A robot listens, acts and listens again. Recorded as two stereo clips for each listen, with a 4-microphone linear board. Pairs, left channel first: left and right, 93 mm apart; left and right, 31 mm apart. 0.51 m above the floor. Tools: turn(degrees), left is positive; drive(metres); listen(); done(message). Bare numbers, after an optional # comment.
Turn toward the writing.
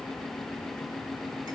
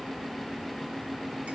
listen()
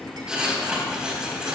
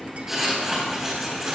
turn(-30)
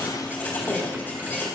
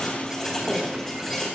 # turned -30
# So it is at 20° left.
turn(20)
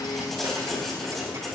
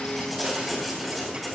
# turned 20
done("Found it: writing, straight ahead.")